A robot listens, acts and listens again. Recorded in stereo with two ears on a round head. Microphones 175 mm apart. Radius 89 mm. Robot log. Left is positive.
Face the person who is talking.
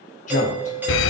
note: The man speaking: about 40° left or 140° left.
cmd yaw +40
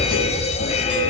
cmd idle
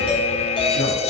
cmd idle
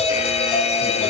end: I heard a man speaking, but can't make it out now. It was about straight ahead or 100° left.